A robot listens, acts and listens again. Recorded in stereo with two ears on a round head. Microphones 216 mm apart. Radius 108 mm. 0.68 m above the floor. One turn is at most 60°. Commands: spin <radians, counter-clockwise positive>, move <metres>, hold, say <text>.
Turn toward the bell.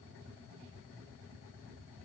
hold
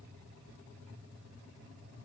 hold
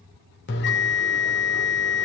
spin 0.87
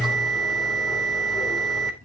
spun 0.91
say Found it: a bell, straight ahead, 2 to 4 m away.